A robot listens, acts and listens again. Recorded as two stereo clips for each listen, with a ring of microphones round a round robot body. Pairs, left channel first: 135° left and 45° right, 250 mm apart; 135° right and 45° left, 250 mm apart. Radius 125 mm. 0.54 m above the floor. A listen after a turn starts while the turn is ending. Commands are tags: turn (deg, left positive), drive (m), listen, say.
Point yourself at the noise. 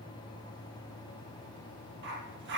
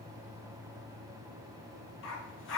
<turn deg="-90"/>
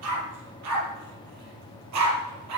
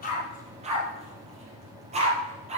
<turn deg="-20"/>
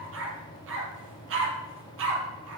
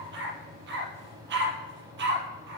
<say>Found it: a dog barking, straight ahead.</say>